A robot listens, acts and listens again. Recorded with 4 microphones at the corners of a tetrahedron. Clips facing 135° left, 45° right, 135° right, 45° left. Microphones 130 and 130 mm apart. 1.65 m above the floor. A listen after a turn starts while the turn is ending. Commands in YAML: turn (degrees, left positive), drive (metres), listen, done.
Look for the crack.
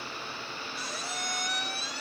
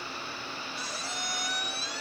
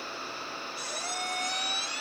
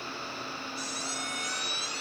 listen: true
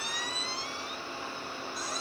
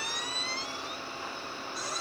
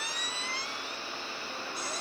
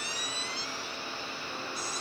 listen: true
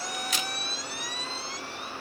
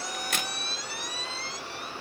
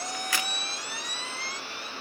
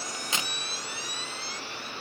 turn: -20
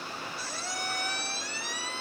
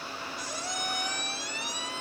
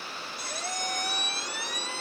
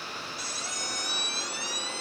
done: "I heard a crack from this way, but can't make it out now."